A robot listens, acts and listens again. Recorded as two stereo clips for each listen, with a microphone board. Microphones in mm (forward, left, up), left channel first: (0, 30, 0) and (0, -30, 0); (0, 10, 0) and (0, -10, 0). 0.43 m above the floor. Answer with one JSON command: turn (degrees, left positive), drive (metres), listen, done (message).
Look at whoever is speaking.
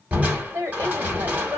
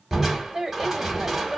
{"turn": -50}
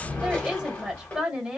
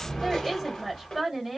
{"turn": -15}
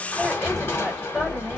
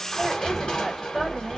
{"listen": true}
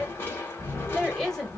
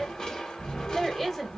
{"done": "Facing the woman speaking."}